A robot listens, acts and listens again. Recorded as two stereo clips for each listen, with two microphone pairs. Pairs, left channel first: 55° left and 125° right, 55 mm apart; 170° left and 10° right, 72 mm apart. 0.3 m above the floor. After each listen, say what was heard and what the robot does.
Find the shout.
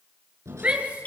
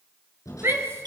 The shout: 60° right. Turn 60° right.
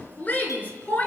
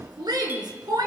Facing the shout.